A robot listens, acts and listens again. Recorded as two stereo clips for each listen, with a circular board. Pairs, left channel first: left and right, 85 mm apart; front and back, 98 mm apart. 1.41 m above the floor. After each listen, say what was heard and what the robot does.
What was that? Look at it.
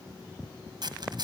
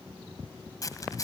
The zipper: 55° right. Turn 55° right.
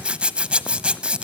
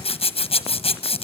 The zipper is now 10° right. Turn 10° right.
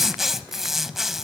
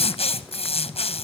Facing the zipper, 1 to 2 m away.